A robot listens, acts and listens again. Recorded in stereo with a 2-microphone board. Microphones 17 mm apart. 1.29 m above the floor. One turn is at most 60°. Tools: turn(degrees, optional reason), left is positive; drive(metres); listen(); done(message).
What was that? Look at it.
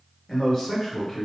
turn(degrees=15, reason="The man speaking: about 15° left or 165° left.")
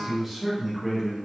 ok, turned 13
turn(degrees=-30)
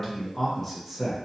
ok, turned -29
done("Facing the man speaking.")